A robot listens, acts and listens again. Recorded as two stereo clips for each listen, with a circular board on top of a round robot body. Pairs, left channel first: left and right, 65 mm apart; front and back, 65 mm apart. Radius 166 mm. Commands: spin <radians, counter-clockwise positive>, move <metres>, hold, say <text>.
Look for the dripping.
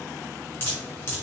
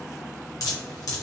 spin 0.61
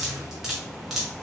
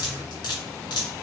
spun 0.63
say Facing the dripping, under 1 m away.